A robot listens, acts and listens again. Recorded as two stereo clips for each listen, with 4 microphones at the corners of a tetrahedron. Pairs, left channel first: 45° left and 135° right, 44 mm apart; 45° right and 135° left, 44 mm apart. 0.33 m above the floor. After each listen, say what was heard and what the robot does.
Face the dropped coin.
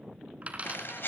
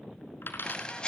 The dropped coin: 75° right. Turn 75° right.
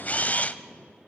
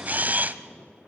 Facing where the dropped coin came from. I can't hear it now.